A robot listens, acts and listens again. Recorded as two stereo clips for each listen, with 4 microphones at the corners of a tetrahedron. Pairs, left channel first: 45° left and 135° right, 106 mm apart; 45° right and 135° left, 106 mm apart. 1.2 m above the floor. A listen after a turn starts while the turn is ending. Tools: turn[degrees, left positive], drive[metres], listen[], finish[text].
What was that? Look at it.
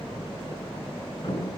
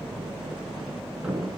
Thought: The thud: 55° left.
Action: turn[55]
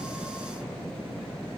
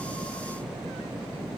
Action: finish[I heard a thud from this way, but can't make it out now.]